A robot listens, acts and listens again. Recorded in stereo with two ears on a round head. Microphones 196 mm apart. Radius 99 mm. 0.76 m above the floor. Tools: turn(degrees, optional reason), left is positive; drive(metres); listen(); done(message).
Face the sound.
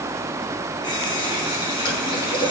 turn(degrees=20, reason="The running tap: about 20° left or 160° left.")
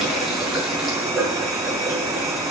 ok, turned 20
done("Found it: a running tap, straight ahead, over 4 m away.")